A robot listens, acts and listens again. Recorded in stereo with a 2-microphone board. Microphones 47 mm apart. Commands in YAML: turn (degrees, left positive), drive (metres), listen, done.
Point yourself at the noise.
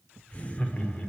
turn: 30
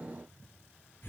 turn: 115
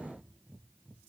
listen: true
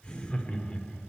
turn: 25
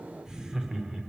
turn: -15
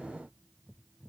listen: true
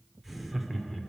done: "Found it: laughter, straight ahead."